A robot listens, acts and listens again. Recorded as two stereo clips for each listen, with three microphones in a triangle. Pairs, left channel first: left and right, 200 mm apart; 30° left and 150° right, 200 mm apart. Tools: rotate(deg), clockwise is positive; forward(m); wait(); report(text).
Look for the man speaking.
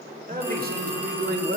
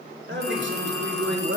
rotate(120)
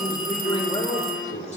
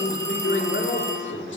rotate(-30)
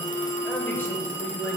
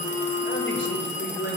rotate(-15)
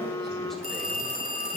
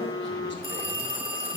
wait()
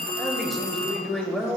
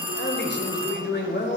report("Facing the man speaking, 1 to 2 m away.")